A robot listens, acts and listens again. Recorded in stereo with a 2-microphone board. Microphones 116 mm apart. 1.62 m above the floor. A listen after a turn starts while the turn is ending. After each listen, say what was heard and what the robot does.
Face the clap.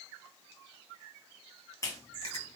The clap: about 30° left or 150° left. Turn 30° left.
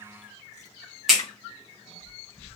Found it: a clap, straight ahead, 1 to 2 m away.